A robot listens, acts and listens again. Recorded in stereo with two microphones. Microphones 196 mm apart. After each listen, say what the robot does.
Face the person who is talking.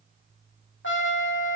Keep listening.
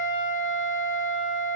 Keep listening.
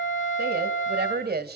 Turn 55° right.
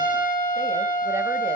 Keep listening.
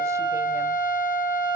Keep listening.
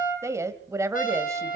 Turn 20° right.
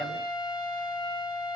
Keep listening.
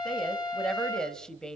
Found it: a woman speaking, straight ahead, 1 to 2 m away.